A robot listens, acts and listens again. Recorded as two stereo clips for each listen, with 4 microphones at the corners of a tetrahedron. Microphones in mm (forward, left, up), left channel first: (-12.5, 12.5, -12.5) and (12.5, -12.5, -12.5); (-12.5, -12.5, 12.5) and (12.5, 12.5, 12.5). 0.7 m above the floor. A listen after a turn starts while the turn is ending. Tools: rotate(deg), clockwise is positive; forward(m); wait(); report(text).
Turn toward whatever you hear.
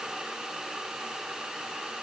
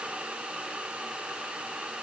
wait()
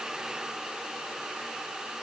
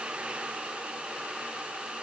wait()
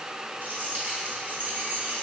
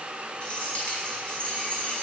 rotate(85)
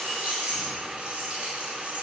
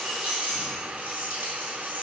report("Found it: keys jangling, straight ahead, over 4 m away.")